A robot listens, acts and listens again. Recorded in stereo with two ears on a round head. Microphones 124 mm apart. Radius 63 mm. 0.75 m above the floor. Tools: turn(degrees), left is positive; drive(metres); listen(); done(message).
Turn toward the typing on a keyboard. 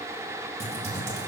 turn(degrees=-45)
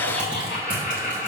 turn(degrees=-10)
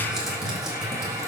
done("Found it: typing on a keyboard, straight ahead, 1 to 2 m away.")